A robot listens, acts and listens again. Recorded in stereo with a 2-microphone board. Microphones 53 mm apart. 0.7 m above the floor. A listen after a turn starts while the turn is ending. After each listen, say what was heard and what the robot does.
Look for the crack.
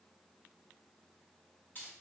Keep listening.
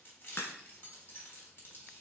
The crack: about 45° left or 135° left. Turn 45° left.
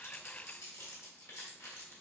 Keep listening.
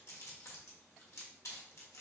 I heard a crack, but can't make it out now. It was about straight ahead or 90° left.